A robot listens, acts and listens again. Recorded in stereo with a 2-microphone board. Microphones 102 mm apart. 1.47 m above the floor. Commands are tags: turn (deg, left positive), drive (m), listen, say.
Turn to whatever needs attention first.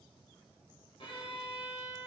<listen/>
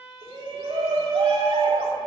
<turn deg="-60"/>
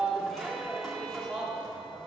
<say>Found it: a shout, straight ahead, 2 to 4 m away.</say>